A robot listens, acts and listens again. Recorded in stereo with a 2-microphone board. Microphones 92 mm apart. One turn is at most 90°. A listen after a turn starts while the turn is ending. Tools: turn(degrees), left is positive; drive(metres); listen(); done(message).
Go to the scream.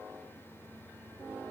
listen()
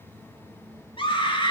turn(degrees=60)
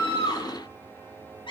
turn(degrees=55)
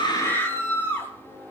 turn(degrees=20)
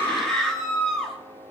drive(metres=1.0)
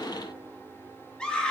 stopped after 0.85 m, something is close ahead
turn(degrees=10)
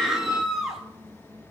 done("Something is in my way. I am facing the scream but have not reached it.")